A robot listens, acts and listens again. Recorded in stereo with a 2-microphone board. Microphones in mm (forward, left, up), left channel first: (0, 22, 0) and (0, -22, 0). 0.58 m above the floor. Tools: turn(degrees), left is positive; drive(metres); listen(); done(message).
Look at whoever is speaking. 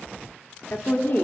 turn(degrees=55)
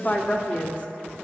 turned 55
turn(degrees=40)
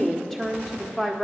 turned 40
done("Facing the woman speaking, 1 to 2 m away.")